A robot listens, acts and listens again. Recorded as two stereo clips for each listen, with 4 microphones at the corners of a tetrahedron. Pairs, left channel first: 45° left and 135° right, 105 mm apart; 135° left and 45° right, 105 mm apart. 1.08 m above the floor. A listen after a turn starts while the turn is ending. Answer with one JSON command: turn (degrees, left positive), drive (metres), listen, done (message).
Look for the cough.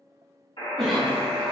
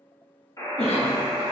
{"turn": 130}
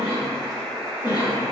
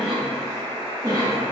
{"done": "Found it: a cough, straight ahead, 1 to 2 m away."}